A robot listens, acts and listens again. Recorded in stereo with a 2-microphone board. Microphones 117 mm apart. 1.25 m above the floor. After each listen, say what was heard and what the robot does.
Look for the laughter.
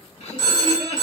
The laughter: about 70° left or 110° left. Turn 70° left.
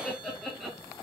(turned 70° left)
Found it: laughter, straight ahead.